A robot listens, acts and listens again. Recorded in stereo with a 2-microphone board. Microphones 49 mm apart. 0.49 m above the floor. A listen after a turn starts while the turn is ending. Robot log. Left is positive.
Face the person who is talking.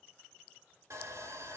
cmd idle
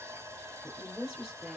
note: The woman speaking: about 25° right or 155° right.
cmd yaw -25
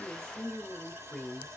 end: Found it: a woman speaking, straight ahead.